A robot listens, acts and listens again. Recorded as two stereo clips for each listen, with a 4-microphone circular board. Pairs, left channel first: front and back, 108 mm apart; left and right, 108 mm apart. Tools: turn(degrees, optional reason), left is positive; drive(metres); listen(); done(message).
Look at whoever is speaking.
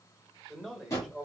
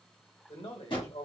turn(degrees=90, reason="The man speaking: 90° left.")
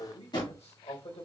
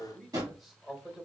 done("Found it: a man speaking, straight ahead.")